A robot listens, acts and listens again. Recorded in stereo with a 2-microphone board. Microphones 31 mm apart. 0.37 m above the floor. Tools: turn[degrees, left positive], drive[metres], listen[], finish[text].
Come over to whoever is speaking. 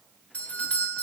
Action: listen[]
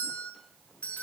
Action: listen[]
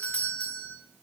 Action: finish[I can't make out anyone speaking, only a doorbell.]